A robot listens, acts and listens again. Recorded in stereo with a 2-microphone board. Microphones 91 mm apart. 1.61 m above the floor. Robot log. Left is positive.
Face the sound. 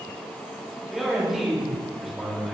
cmd yaw -30
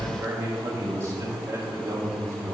note: So it is at 145° right.
cmd yaw -145
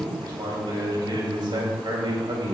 note: The man speaking is now 60° right.
cmd yaw -60
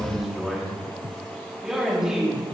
end: Found it: a man speaking, straight ahead.